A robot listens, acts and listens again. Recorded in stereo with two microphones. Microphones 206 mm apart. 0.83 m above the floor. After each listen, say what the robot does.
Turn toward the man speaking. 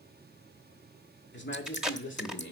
Turn 70° left.
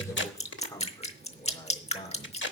Turn 25° left.
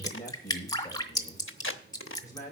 Turn 15° left.
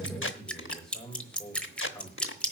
Found it: a man speaking, straight ahead.